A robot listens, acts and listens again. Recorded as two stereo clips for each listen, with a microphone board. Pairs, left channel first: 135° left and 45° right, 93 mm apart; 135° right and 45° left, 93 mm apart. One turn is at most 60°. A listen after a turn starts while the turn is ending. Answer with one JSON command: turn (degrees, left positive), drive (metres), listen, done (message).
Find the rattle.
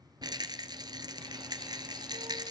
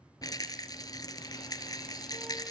{"turn": -60}
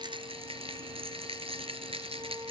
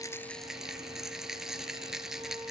{"turn": -40}
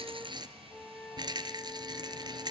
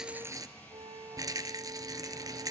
{"done": "Found it: a rattle, straight ahead, 1 to 2 m away."}